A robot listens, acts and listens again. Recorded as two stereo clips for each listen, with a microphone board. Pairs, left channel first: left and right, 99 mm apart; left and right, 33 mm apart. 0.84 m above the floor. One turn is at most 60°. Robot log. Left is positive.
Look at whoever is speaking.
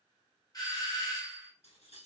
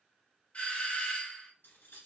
cmd idle
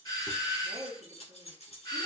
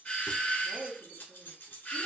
note: The woman speaking: about 50° right or 130° right.
cmd yaw -50
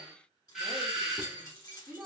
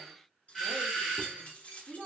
end: Facing the woman speaking.